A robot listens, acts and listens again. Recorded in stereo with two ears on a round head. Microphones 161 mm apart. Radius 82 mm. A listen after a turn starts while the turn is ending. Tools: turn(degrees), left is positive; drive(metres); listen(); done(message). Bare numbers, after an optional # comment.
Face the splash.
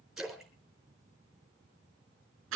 turn(-30)
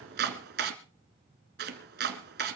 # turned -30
listen()
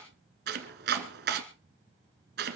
done("I heard a splash, but can't make it out now. It was about 25° left or 145° right.")